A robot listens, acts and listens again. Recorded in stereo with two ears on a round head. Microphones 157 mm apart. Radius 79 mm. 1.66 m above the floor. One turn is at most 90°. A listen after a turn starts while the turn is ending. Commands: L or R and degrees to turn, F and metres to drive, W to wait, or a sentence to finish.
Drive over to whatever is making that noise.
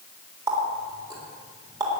R20
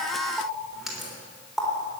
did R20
F1.0
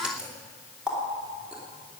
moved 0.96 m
F1.0
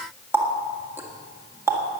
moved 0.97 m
R15
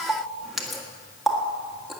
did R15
F1.0
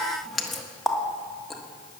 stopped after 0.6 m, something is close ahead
Arrived at the running tap, straight ahead.